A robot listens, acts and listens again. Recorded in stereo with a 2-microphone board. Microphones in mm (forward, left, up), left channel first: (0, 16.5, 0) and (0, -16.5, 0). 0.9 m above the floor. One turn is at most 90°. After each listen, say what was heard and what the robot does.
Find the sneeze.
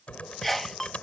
Turn 30° left.
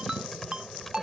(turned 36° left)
Keep listening.
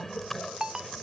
I heard a sneeze, but can't make it out now. It was about 30° right or 140° left.